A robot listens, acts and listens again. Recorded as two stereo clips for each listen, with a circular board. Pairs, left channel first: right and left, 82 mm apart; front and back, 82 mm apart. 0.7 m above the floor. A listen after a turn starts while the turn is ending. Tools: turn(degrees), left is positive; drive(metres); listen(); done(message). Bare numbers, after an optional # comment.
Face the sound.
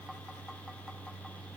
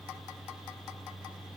listen()
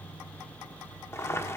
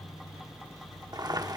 # The boiling: 145° right.
turn(-145)
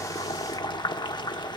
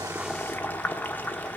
# The boiling is now 70° right.
turn(-70)
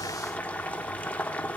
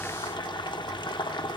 # The boiling is now 20° right.
turn(-20)
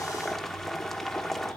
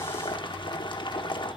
done("Facing the boiling, under 1 m away.")